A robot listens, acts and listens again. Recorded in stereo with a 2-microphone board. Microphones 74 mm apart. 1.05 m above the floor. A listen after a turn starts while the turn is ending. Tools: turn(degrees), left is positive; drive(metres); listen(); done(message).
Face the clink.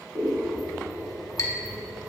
turn(degrees=50)
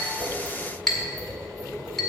done("Facing the clink, 1 to 2 m away.")